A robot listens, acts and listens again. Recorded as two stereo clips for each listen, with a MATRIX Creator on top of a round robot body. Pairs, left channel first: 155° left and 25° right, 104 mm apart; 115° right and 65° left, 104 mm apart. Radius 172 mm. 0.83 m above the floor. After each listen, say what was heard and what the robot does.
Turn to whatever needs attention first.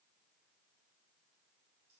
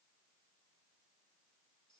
Keep listening.
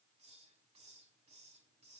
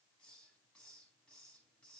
Keep listening.
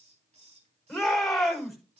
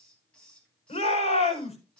The shout: 115° right. Turn 115° right.
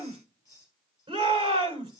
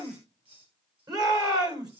The shout is now 15° left. Turn 15° left.
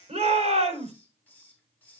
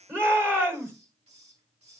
Facing the shout, over 4 m away.